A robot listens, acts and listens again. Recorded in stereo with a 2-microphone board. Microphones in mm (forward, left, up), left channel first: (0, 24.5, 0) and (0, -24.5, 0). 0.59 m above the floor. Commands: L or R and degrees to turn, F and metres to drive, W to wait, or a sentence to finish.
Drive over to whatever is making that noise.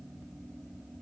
W
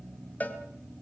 L30
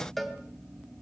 F1.0
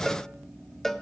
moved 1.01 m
F1.0
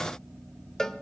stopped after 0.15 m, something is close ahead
L10
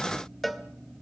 Arrived at the cowbell, straight ahead.